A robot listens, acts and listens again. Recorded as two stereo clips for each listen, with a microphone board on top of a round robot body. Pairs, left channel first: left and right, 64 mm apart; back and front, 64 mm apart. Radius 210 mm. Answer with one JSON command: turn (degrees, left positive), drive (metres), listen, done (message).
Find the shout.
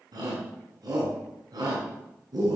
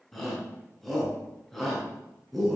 {"turn": -90}
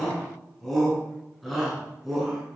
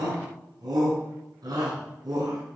{"done": "Found it: a shout, straight ahead, over 4 m away."}